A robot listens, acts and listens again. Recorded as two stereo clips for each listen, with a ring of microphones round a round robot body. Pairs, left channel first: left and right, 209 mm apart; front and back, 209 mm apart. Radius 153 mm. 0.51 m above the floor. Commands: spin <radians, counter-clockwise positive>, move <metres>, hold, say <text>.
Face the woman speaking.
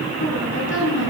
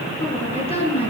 spin 1.13
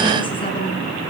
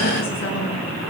hold
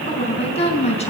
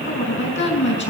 spin 0.52
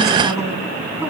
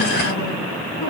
hold
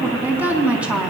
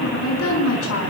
say Facing the woman speaking.